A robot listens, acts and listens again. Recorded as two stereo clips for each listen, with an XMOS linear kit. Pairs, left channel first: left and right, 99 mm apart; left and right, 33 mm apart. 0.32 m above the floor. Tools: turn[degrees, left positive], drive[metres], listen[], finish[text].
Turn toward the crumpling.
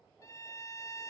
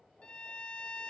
Action: listen[]
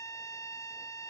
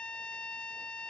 Action: listen[]
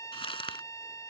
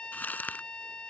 Action: turn[90]
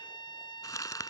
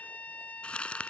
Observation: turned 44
Thought: So it is at 40° left.
Action: turn[40]
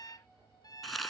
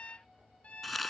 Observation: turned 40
Action: finish[Found it: crumpling, straight ahead.]